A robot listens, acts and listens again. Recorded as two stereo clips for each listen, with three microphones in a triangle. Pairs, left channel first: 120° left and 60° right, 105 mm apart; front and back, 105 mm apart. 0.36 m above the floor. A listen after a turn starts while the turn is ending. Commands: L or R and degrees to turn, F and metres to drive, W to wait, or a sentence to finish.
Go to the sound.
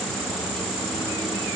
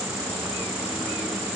W
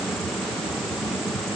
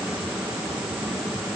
W
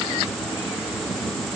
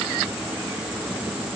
I can't make out anything.